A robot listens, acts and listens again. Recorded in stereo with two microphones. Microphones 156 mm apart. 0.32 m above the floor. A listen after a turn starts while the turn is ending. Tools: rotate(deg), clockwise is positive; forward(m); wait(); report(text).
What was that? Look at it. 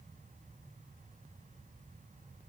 wait()
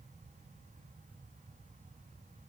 wait()
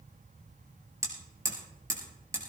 rotate(20)
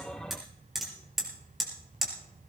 report("Facing the hammering.")